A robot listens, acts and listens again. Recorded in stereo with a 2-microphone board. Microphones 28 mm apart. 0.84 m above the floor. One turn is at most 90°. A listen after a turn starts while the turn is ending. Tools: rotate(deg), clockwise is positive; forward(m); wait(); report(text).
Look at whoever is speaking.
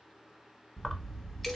wait()
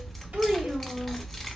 rotate(90)
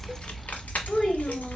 rotate(-10)
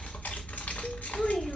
wait()
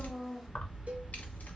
report("Found it: a child speaking, straight ahead.")